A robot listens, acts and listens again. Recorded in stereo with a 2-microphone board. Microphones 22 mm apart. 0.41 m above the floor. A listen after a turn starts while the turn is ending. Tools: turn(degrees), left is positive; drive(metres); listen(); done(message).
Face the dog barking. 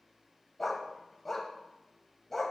turn(degrees=30)
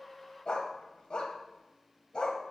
turn(degrees=140)
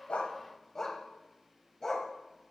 turn(degrees=30)
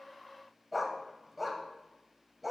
done("Facing the dog barking, under 1 m away.")